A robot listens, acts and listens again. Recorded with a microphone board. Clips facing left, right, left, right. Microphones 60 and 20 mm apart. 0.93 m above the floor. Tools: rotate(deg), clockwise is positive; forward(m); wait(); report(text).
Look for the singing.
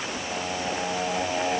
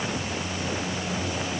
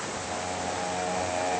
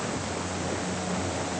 rotate(-65)
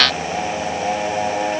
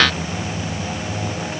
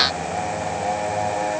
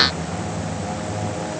rotate(-55)
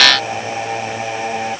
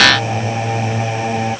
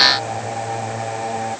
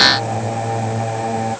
report("Found it: singing, straight ahead.")